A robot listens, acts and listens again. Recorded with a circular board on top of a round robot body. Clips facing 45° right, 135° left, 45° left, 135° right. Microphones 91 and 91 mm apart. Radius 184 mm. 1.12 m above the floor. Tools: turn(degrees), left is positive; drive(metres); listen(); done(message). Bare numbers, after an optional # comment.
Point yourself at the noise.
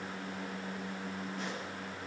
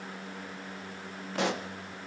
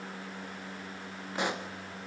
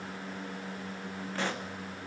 # The pop: 120° left.
turn(120)
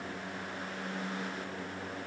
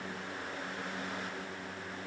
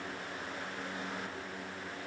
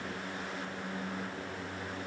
done("I heard a pop from this way, but can't make it out now.")